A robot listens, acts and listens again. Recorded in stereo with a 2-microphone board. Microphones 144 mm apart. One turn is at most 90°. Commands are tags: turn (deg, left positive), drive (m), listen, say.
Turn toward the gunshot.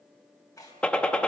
<turn deg="30"/>
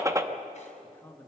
<turn deg="-20"/>
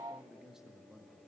<say>I heard a gunshot from this way, but can't make it out now.</say>